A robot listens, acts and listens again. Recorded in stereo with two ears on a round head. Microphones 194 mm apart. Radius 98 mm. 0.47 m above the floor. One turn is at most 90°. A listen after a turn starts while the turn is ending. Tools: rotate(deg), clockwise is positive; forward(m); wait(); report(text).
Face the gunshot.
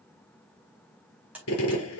rotate(-65)
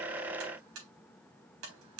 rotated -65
wait()
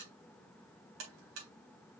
report("I heard a gunshot, but can't make it out now. It was about straight ahead or 50° left.")